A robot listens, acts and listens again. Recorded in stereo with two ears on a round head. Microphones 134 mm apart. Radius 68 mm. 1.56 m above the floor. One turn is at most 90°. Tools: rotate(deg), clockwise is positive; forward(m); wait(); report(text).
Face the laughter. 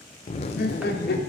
rotate(-90)
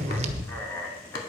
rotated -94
rotate(-15)
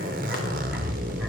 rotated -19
wait()
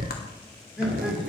report("Found it: laughter, straight ahead.")